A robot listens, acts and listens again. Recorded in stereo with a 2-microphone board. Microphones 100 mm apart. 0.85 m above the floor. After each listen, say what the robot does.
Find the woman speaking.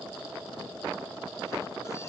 Keep listening.
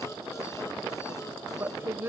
Turn 25° right.
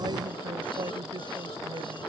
Turn 130° right.
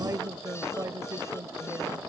Turn 30° right.
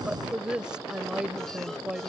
Turn 10° right.
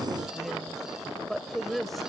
Facing the woman speaking.